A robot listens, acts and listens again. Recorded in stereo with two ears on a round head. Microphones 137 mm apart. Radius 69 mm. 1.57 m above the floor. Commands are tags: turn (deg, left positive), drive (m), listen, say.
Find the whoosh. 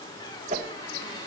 <turn deg="-45"/>
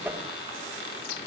<turn deg="-10"/>
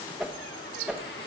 <say>Found it: a whoosh, straight ahead, 1 to 2 m away.</say>